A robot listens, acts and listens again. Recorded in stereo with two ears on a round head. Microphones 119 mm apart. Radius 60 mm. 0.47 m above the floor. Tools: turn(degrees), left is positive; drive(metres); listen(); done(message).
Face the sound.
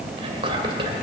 turn(degrees=-40)
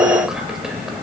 done("Found it: whispering, straight ahead.")